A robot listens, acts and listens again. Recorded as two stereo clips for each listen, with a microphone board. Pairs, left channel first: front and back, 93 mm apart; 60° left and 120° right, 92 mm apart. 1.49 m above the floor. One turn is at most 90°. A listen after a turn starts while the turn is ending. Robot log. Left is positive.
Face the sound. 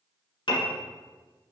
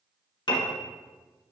note: The piano: 30° left.
cmd yaw +30
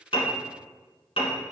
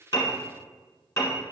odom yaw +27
end: Facing the piano, 1 to 2 m away.